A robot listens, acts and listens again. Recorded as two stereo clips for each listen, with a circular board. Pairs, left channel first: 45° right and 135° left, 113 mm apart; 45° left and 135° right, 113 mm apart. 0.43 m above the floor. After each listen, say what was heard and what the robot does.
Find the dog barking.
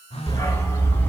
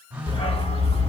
The dog barking: 25° left. Turn 25° left.
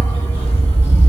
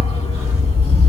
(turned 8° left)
The dog barking is now 30° left. Turn 30° left.
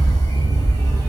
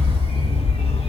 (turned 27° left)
The dog barking is now 15° left. Turn 15° left.
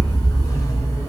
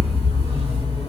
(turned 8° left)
The dog barking is now 20° left. Turn 20° left.
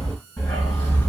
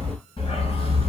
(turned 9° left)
The dog barking is now 15° left. Turn 15° left.
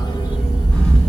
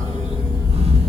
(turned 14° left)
Found it: a dog barking, straight ahead, 2 to 4 m away.